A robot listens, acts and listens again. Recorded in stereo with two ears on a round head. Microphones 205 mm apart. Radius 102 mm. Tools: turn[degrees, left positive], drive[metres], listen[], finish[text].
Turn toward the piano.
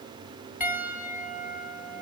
Action: turn[-30]
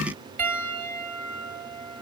Thought: So it is at 145° right.
Action: turn[-145]
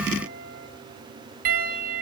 Thought: The piano is now 40° right.
Action: turn[-40]
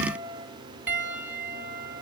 Action: finish[Facing the piano.]